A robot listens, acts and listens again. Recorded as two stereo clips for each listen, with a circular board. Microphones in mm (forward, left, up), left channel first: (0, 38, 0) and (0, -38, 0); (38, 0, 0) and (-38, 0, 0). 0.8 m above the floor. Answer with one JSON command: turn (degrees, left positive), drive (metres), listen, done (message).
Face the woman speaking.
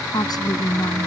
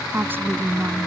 {"turn": 115}
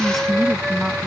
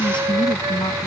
{"done": "Facing the woman speaking."}